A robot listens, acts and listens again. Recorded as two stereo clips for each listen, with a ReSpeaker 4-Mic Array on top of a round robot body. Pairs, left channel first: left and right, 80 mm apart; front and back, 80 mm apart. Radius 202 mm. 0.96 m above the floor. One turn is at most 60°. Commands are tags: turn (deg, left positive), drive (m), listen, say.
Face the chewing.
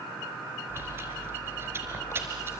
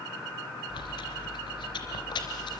<turn deg="-25"/>
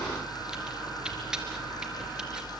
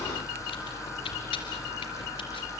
<turn deg="-10"/>
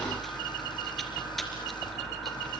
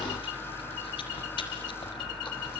<listen/>
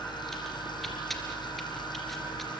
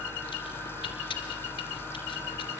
<say>Found it: chewing, straight ahead, 2 to 4 m away.</say>